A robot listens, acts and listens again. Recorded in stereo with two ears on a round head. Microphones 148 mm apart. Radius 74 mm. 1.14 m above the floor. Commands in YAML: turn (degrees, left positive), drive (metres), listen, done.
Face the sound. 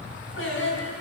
turn: 90
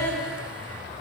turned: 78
done: "Facing the singing."